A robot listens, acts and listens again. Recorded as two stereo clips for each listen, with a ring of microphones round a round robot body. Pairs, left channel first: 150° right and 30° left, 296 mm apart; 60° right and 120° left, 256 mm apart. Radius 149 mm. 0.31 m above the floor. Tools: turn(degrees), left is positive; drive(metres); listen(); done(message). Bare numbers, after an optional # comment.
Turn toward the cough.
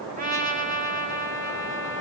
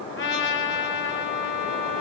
listen()
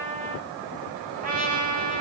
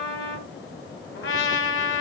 listen()
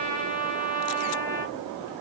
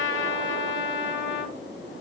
done("I can't make out a cough, only a trumpet.")